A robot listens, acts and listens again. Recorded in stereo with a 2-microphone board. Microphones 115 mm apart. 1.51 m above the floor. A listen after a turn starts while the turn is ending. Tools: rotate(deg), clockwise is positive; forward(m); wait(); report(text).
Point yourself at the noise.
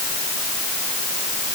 wait()
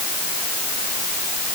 wait()
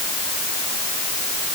report("I can't make out anything to turn to.")